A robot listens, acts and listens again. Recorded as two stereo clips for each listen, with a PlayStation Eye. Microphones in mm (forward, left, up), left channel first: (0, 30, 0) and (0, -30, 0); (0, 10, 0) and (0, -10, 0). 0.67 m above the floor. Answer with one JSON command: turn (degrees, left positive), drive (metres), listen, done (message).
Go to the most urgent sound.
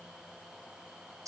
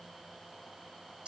{"listen": true}
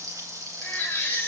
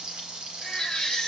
{"turn": 35}
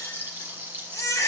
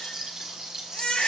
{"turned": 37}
{"turn": 110}
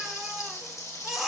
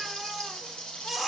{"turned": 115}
{"drive": 1.0}
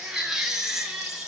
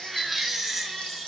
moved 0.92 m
{"turn": -10}
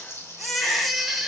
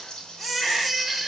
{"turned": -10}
{"drive": 1.0}
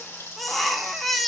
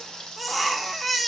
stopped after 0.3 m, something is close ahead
{"done": "I am next to the baby crying."}